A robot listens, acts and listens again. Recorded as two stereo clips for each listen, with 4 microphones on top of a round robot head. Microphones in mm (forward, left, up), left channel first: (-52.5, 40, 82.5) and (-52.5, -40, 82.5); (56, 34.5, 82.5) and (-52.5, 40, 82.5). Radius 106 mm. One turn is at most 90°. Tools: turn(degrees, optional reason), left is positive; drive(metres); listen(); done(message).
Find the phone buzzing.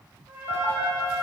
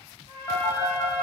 turn(degrees=55, reason="The phone buzzing: 55° left.")
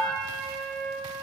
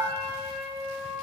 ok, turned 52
listen()
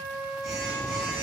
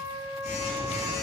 done("Found it: a phone buzzing, straight ahead.")